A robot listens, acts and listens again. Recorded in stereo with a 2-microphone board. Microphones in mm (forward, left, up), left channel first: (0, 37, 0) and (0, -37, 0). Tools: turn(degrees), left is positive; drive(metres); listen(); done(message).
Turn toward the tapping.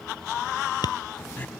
turn(degrees=70)
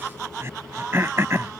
listen()
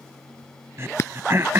turn(degrees=40)
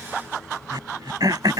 listen()
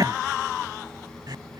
listen()
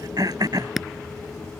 done("Found it: tapping, straight ahead.")